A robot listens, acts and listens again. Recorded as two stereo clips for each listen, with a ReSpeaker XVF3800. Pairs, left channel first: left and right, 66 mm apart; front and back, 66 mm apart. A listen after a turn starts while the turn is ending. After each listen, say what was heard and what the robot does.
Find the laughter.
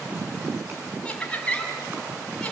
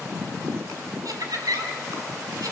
The laughter: 165° left. Turn 165° left.
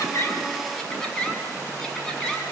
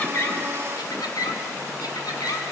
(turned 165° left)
The laughter is now 10° left. Turn 10° left.
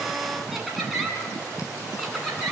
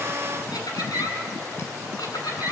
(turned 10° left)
Facing the laughter, over 4 m away.